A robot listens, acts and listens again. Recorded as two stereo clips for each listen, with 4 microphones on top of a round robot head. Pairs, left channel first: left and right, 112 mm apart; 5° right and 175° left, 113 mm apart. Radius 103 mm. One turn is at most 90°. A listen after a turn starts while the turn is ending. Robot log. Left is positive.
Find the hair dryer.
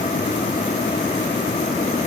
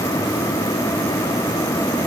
cmd idle
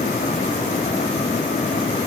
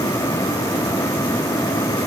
cmd idle
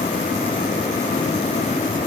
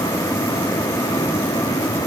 end: I can't make out a hair dryer to turn to.